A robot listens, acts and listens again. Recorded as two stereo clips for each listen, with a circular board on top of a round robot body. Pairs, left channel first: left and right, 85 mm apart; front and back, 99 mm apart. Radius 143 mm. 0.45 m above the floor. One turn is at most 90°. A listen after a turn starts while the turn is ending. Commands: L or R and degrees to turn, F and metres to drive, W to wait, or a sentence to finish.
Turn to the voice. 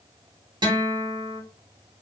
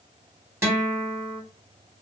W
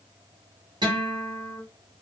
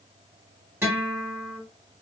W
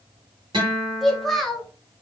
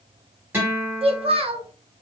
L90
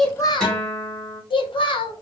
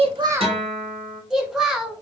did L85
L90
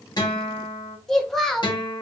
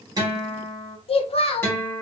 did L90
Facing the child speaking, 1 to 2 m away.